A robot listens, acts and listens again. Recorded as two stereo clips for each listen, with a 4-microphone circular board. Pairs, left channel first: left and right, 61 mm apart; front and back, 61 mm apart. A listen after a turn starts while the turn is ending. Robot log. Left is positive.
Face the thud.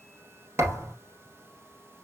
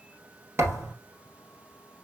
note: The thud: 135° right.
cmd yaw -135
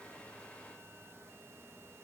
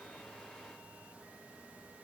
end: Facing where the thud came from. I can't hear it now.